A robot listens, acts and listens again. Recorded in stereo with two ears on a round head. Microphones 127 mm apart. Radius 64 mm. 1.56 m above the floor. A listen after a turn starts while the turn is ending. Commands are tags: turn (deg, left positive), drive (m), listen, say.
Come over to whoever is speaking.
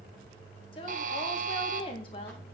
<turn deg="40"/>
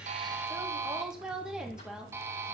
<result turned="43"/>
<drive m="1.0"/>
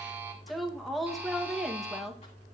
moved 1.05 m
<drive m="1.0"/>
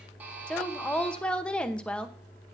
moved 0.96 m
<turn deg="10"/>
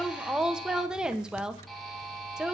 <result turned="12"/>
<drive m="1.0"/>
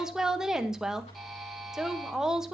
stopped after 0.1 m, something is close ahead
<say>Arrived at the woman speaking, straight ahead.</say>